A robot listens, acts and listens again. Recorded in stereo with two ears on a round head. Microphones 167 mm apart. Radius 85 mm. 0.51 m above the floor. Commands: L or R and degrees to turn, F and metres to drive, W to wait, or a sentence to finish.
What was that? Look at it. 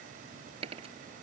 R35
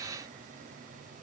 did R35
W
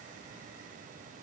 I heard a dropped coin, but can't make it out now. It was about straight ahead or 110° right.